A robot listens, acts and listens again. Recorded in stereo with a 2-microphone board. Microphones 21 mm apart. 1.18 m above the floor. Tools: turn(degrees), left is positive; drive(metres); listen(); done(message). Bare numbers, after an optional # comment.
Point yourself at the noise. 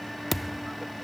turn(30)
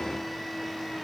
listen()
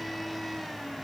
done("I heard a thud, but can't make it out now. It was about 25° right or 145° left.")